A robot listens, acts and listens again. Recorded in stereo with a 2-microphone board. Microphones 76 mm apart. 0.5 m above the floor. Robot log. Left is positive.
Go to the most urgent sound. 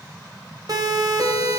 note: The siren: about 55° right or 125° right.
cmd yaw -55
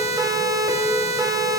note: So it is at 60° right.
cmd yaw -60
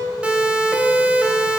note: The siren is now 15° right.
cmd yaw -15
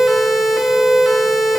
cmd fwd 1.0
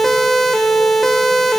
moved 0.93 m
cmd fwd 1.0
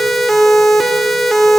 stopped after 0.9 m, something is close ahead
end: Arrived at the siren, straight ahead.